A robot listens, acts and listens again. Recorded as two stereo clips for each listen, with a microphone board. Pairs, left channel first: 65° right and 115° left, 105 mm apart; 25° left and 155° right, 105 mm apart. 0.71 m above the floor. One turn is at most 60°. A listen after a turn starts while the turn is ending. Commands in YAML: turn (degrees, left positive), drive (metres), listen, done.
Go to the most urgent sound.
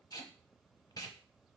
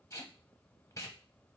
listen: true
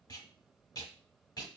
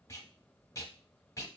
listen: true
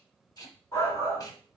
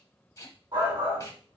turn: -60
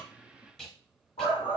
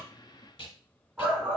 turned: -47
turn: -60
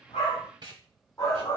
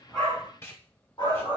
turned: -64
drive: 1.0
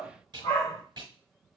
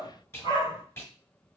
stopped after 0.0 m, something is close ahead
done: "Blocked. The shout is further on, straight ahead."